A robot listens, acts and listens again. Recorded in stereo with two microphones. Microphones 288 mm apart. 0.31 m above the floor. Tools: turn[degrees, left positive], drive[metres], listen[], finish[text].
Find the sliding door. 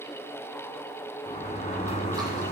Thought: The sliding door: about 25° left or 155° left.
Action: turn[25]
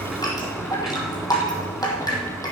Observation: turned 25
Action: finish[Facing the sliding door, 1 to 2 m away.]